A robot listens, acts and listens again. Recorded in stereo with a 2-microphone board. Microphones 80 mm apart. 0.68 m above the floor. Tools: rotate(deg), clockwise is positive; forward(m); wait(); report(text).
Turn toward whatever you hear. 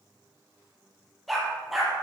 rotate(-30)
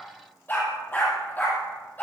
rotate(-160)
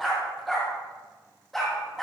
report("Facing the dog barking, over 4 m away.")